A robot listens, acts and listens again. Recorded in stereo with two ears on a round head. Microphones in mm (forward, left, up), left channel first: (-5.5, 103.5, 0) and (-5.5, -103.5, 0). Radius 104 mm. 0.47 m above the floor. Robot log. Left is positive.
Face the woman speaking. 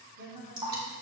note: The woman speaking: about 50° right or 130° right.
cmd yaw -50
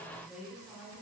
end: Found it: a woman speaking, straight ahead.